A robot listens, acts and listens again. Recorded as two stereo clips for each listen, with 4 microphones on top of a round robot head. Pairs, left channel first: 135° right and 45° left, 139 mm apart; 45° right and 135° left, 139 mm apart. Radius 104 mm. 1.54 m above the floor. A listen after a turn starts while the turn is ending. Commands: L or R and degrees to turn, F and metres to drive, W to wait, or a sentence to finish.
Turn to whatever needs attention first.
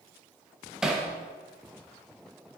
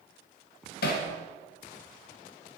W
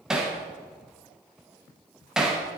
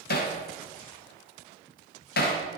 W
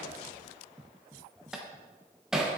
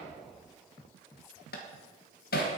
I can't make out anything urgent to turn to.